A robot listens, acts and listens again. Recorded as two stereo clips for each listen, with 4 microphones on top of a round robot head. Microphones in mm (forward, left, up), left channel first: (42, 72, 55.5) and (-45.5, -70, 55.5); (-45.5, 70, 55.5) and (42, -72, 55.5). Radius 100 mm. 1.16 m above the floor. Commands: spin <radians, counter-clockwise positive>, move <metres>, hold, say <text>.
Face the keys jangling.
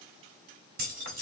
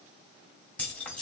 spin -2.71
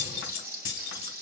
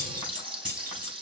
spin 0.44
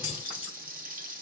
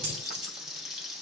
hold
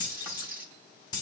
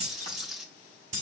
spin -0.17
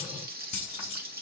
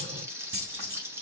say Found it: keys jangling, straight ahead.